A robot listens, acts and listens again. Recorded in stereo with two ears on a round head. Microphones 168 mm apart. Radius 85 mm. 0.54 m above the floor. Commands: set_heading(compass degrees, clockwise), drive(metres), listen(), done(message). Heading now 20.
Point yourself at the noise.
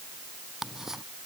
set_heading(350)
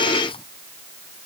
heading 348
set_heading(198)
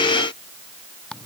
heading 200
done("Facing the ticking.")